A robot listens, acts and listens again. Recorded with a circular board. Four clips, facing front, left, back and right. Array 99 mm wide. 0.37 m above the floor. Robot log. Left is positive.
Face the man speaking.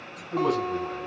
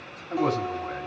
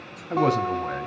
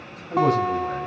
note: The man speaking: 175° left.
cmd yaw +175
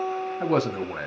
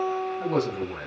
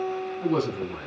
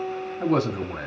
note: The man speaking is now 15° right.
cmd yaw -15
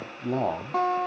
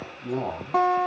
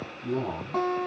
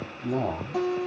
end: Found it: a man speaking, straight ahead, 1 to 2 m away.